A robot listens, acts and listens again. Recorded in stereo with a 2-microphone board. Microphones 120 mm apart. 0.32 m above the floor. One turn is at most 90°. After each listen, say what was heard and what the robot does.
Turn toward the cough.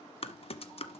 Keep listening.
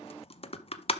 Keep listening.
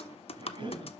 The cough: about 40° right or 140° right. Turn 40° right.
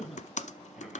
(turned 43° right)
Facing the cough, 2 to 4 m away.